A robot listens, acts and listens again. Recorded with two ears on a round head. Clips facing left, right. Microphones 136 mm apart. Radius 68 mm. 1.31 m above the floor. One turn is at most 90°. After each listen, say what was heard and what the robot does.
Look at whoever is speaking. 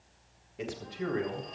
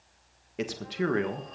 Turn 90° right.
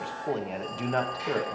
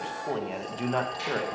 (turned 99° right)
Found it: a man speaking, straight ahead.